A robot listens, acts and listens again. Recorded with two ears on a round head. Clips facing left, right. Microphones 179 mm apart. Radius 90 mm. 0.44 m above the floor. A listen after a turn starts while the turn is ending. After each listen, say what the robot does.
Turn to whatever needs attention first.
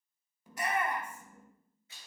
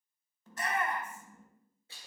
Turn 30° left.
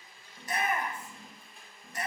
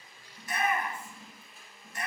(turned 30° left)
Turn 140° left.
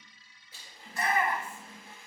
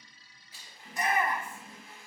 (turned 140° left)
Turn 20° right.
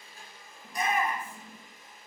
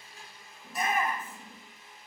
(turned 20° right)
Found it: a shout, straight ahead, 1 to 2 m away.